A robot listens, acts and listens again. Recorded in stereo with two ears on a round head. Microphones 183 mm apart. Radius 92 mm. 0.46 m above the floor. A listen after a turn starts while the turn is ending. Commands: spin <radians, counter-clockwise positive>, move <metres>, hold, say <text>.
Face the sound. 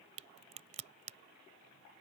spin -0.61
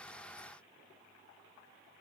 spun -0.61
hold
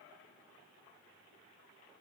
say I heard a crack, but can't make it out now. It was about straight ahead or 110° right.